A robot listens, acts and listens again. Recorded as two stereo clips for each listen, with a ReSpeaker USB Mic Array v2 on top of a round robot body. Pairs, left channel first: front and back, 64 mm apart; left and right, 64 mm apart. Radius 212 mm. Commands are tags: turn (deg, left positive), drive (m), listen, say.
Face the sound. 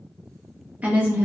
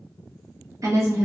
<turn deg="-120"/>
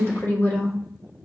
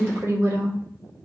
<turn deg="-55"/>
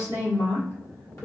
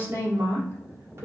<turn deg="-35"/>
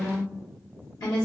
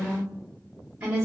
<turn deg="-25"/>
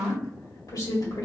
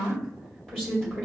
<turn deg="10"/>
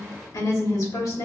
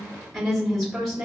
<say>Facing the woman speaking, 2 to 4 m away.</say>